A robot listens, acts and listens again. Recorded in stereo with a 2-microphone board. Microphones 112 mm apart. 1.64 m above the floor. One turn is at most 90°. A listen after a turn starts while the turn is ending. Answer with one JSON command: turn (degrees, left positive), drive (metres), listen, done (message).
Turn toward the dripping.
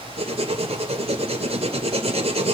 {"listen": true}
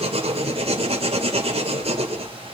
{"listen": true}
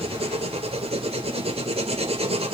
{"done": "I can't make out dripping, only writing."}